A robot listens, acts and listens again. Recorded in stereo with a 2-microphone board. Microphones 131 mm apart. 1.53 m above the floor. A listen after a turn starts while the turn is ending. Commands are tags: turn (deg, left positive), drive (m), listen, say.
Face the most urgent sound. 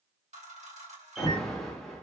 <turn deg="30"/>
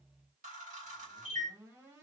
<listen/>
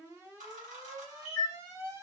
<turn deg="-25"/>
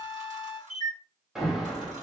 <say>Facing the alarm.</say>